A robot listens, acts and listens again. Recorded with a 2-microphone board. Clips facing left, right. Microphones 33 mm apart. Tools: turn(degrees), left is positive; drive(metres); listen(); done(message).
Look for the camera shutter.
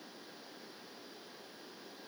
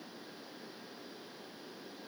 listen()
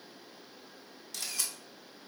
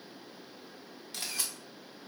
turn(degrees=-25)
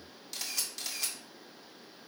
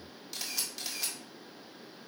done("Found it: a camera shutter, straight ahead, 1 to 2 m away.")